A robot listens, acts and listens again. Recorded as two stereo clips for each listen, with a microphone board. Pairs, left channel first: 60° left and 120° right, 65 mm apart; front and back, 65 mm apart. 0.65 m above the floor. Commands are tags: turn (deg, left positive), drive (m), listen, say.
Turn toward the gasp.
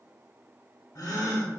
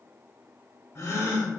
<turn deg="45"/>
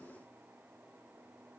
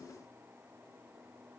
<say>I heard a gasp from this way, but can't make it out now.</say>